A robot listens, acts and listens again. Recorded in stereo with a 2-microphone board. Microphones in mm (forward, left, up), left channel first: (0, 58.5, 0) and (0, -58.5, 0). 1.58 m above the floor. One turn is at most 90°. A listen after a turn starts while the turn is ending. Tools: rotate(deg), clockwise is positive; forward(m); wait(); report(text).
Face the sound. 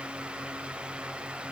wait()
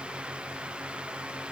wait()
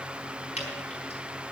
rotate(-70)
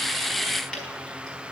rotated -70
wait()
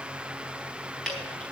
report("Found it: dripping, straight ahead, over 4 m away.")